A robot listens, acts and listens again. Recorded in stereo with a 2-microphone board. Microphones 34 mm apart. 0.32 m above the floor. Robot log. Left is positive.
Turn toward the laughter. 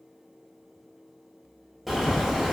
cmd idle
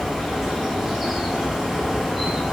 cmd idle
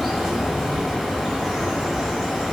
end: I can't make out laughter to turn to.